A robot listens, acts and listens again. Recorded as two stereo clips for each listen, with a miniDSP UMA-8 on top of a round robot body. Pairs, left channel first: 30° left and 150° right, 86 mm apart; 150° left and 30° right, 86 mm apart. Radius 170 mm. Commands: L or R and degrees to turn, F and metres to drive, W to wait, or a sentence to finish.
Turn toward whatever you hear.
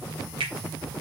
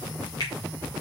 R165
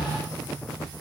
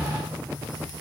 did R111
R55
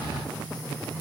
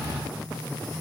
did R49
W
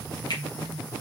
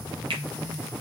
Facing the finger snap, 2 to 4 m away.